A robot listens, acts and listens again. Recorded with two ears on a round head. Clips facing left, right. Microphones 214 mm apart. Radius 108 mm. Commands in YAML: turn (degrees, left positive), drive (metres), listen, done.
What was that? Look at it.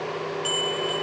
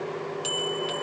turn: -30
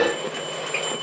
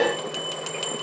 turn: -115
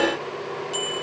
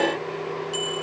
done: "Found it: a bell, straight ahead, 1 to 2 m away."